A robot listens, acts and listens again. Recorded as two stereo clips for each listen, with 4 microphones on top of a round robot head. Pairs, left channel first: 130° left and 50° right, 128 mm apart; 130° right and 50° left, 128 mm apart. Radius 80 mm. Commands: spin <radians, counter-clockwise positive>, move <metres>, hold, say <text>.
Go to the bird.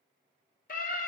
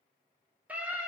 hold
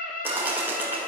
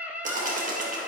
spin 0.44
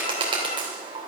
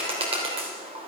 move 1.0
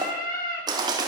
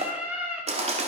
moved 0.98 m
spin 0.17
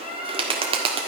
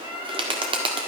move 1.0
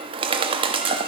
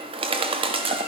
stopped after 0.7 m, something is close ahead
say I am next to the bird.